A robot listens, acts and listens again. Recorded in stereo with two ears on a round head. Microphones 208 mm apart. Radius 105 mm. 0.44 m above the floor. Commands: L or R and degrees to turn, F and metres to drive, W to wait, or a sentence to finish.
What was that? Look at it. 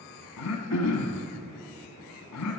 L90
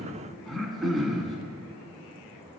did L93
Facing the throat clearing, 1 to 2 m away.